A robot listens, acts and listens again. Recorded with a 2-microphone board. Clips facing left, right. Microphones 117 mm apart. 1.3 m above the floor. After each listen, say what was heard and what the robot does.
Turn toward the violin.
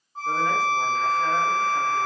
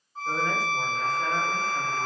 The violin: about 45° left or 135° left. Turn 45° left.
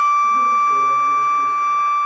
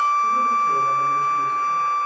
Found it: a violin, straight ahead, 1 to 2 m away.